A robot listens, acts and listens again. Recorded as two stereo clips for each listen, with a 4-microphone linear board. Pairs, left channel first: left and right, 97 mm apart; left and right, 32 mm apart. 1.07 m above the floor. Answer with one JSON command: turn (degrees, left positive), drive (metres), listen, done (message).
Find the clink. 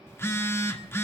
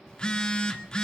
{"listen": true}
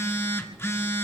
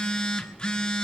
{"listen": true}
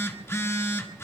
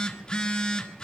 {"done": "I can't make out a clink, only a phone buzzing."}